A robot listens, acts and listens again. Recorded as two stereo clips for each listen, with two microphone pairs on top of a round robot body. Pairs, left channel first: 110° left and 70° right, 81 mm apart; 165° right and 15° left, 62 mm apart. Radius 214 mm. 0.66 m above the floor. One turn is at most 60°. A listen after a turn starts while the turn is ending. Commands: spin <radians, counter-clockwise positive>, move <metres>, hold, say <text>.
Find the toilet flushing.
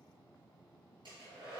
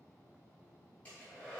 hold
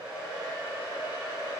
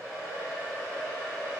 hold
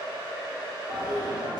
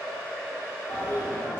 spin -1.05
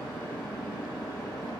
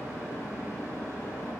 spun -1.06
spin -1.05
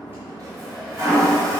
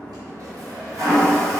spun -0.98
spin -0.26
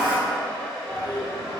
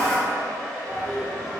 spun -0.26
say Facing the toilet flushing, under 1 m away.